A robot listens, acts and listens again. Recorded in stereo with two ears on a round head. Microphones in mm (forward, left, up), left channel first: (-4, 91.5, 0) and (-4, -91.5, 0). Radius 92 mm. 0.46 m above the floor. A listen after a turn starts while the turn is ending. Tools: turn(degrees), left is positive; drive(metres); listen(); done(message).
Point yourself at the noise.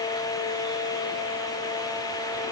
listen()
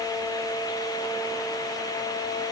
listen()
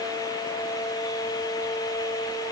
done("I can't make out anything.")